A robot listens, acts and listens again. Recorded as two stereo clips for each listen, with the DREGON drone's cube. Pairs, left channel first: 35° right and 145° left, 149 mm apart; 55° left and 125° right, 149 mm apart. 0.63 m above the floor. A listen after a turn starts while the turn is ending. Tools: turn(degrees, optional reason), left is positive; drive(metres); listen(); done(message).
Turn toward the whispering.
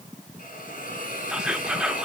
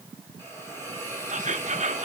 turn(degrees=-130, reason="The whispering: 130° right.")
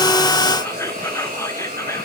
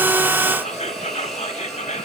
turn(degrees=30, reason="The whispering is now 30° left.")
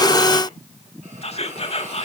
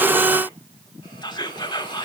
done("Facing the whispering, 1 to 2 m away.")